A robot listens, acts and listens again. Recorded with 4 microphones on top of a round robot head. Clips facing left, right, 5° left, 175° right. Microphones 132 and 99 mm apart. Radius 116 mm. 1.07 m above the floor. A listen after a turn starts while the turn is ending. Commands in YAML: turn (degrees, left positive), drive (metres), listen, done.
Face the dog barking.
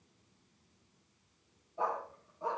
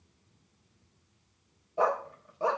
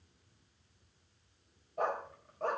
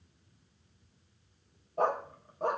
turn: -95
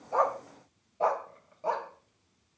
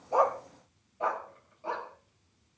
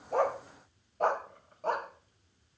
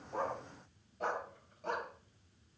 turn: 45
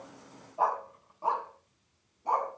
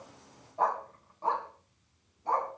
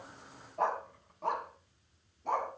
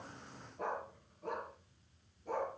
turn: 15
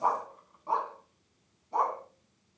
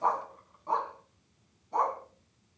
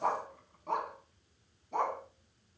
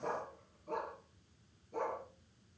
done: "Facing the dog barking."